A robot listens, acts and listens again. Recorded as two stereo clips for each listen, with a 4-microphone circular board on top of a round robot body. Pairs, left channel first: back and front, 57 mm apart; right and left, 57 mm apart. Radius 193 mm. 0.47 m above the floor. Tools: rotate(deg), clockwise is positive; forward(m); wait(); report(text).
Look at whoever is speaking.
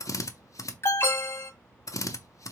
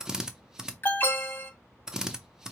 wait()
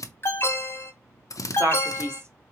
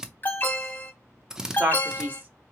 rotate(-40)
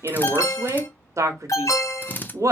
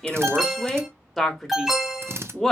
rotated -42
report("Facing the man speaking, 1 to 2 m away.")